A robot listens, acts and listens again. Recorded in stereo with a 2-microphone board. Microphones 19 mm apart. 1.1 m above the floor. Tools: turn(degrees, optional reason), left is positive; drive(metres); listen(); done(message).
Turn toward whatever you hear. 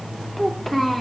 turn(degrees=20, reason="The child speaking: about 20° left or 160° left.")
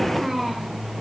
done("Found it: a child speaking, straight ahead.")